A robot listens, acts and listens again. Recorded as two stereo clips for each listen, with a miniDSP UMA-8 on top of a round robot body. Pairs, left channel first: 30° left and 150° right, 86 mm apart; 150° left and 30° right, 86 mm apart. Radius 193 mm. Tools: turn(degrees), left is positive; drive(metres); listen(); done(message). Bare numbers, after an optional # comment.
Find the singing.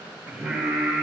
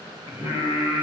# The singing: 55° right.
turn(-55)
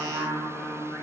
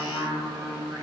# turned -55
# The singing is now 20° left.
turn(20)
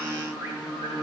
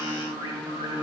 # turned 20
# The singing is now 10° left.
turn(10)
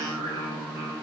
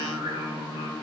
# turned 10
done("Found it: singing, straight ahead, 2 to 4 m away.")